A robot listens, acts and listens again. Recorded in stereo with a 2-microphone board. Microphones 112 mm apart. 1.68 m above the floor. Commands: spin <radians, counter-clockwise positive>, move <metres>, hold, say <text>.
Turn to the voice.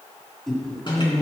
spin 0.52
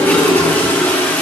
hold
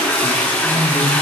spin 2.36
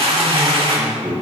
spin -0.26
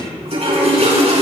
hold
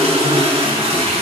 hold
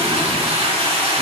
say Facing where the man speaking came from. I can't hear it now.